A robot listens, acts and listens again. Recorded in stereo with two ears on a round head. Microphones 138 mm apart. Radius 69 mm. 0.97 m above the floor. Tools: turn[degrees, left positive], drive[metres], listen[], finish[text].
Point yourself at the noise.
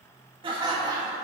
Thought: The laughter: about 20° right or 160° right.
Action: turn[-20]
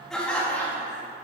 Thought: So it is at 15° left.
Action: turn[15]
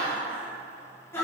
Thought: The laughter is now 20° left.
Action: turn[20]
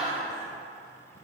Action: finish[Facing the laughter, 2 to 4 m away.]